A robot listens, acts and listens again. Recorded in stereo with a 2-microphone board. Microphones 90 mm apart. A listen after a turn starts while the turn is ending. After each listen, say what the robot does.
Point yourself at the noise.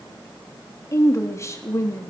Turn 35° left.
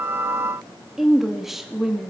Facing the woman speaking, 2 to 4 m away.